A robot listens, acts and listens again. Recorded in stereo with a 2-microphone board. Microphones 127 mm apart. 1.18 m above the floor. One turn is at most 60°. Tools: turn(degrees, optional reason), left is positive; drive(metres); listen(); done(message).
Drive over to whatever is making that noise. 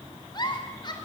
turn(degrees=35, reason="The giggle: about 35° left or 145° left.")
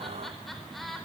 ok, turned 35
drive(metres=1.0)
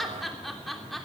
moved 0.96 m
drive(metres=1.0)
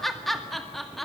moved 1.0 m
drive(metres=1.0)
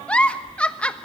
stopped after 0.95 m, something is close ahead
turn(degrees=10, reason="The giggle is now 10° left.")
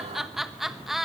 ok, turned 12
done("I am next to the giggle.")